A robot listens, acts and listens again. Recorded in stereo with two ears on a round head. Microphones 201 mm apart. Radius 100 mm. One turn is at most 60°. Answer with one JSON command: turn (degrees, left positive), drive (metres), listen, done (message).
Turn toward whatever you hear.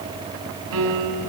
{"turn": -60}
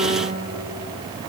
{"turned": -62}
{"turn": -25}
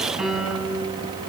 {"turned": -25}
{"done": "Facing the piano."}